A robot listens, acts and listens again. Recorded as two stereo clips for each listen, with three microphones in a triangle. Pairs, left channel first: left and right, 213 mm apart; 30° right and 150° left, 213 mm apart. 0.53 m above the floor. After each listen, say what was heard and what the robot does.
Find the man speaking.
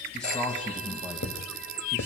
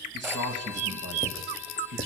The man speaking: 170° left. Turn 170° left.
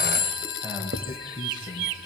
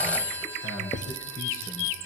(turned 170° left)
The man speaking is now 20° right. Turn 20° right.
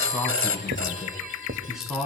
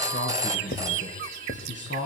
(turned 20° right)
Facing the man speaking.